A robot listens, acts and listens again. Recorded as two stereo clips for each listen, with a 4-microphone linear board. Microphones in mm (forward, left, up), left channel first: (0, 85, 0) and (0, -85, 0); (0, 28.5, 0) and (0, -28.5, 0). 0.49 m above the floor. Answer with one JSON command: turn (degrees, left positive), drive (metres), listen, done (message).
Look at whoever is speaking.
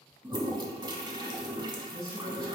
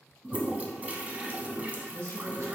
{"turn": -55}
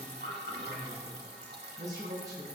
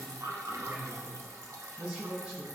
{"turn": -25}
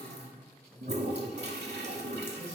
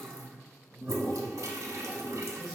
{"turn": -15}
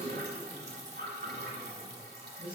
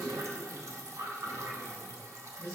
{"turn": -10}
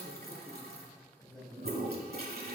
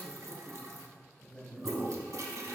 {"done": "Found it: a man speaking, straight ahead."}